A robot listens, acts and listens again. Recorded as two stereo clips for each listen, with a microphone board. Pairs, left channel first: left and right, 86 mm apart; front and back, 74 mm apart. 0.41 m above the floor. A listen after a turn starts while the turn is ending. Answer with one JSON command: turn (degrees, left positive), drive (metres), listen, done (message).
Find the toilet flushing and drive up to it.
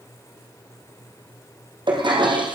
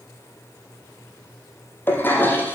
{"turn": -65}
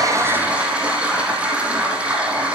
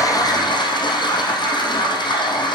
{"turn": -15}
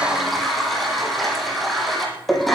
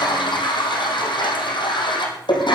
{"drive": 1.0}
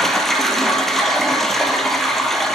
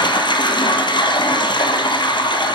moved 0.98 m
{"drive": 1.0}
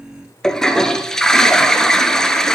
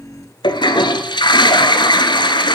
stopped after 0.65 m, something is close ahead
{"done": "Arrived at the toilet flushing, straight ahead."}